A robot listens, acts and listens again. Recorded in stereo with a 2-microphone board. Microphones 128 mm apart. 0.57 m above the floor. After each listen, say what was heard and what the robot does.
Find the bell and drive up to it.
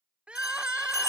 The bell: about 25° left or 155° left. Turn 25° left.
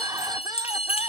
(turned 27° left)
So it is at 130° left. Turn 130° left.
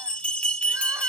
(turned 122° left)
The bell is now 10° left. Turn 10° left.
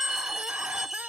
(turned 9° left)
Drive 1.0 m forward.
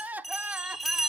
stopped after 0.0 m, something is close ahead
Blocked. The bell is further on, straight ahead.